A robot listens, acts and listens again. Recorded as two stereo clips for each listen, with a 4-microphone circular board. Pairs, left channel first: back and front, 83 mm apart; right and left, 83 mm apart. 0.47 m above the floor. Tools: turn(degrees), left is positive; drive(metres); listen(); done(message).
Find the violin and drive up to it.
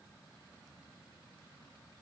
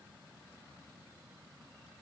listen()
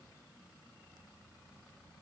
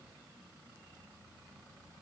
listen()
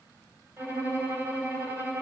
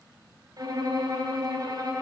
turn(degrees=55)
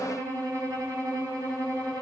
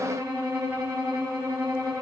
turn(degrees=35)
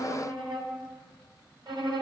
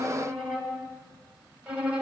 turn(degrees=15)
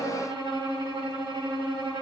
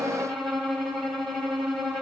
drive(metres=1.0)
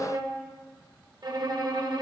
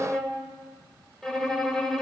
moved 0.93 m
drive(metres=1.0)
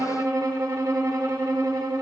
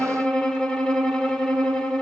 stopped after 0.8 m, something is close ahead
turn(degrees=-15)
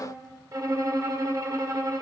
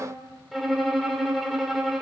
done("Arrived at the violin, straight ahead.")